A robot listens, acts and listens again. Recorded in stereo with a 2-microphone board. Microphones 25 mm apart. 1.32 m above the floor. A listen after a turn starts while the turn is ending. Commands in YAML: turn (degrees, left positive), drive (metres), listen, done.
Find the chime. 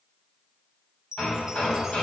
turn: -25
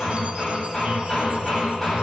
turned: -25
listen: true
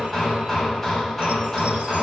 listen: true
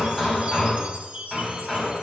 turn: -125
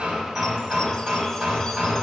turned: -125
listen: true
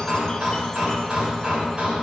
listen: true
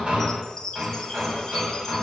turn: 25
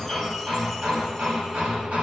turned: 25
listen: true
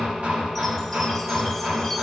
listen: true
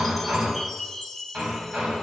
done: "Found it: a chime, straight ahead."